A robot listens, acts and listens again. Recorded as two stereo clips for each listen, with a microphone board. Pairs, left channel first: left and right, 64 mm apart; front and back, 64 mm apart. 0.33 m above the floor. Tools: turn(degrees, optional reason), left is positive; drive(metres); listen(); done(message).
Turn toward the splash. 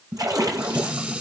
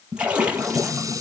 turn(degrees=-110, reason="The splash: 110° right.")
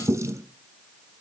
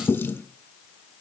done("Facing where the splash came from. I can't hear it now.")